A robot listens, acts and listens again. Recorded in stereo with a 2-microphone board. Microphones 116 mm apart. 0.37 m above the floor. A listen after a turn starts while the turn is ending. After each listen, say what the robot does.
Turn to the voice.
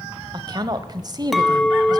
Turn 40° right.
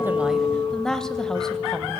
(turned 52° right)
Found it: a woman speaking, straight ahead, 1 to 2 m away.